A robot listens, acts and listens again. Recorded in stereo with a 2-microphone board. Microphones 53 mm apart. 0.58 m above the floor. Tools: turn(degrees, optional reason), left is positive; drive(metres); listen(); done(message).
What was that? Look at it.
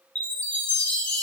turn(degrees=25, reason="The chime: about 25° left or 155° left.")
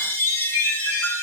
turn(degrees=125, reason="So it is at 125° left.")
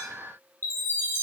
turn(degrees=45, reason="The chime is now 45° left.")
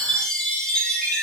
turn(degrees=20, reason="The chime is now 20° left.")
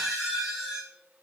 done("Facing the chime.")